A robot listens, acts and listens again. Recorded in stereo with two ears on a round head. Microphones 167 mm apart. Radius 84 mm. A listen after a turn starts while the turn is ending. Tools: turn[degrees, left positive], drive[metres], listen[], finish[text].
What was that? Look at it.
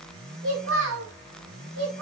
Thought: The child speaking: about 70° right or 110° right.
Action: turn[-70]
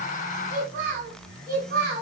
Thought: So it is at 55° right.
Action: turn[-55]
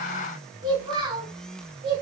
Thought: The child speaking is now 25° right.
Action: turn[-25]
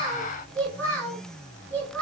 Thought: The child speaking is now 10° left.
Action: turn[10]
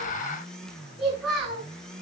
Action: finish[Facing the child speaking, over 4 m away.]